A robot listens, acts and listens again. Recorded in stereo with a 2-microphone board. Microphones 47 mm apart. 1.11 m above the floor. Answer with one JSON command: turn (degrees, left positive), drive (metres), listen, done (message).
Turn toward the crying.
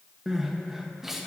{"turn": -30}
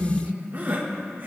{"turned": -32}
{"turn": -140}
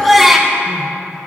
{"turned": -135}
{"done": "Facing the crying, 1 to 2 m away."}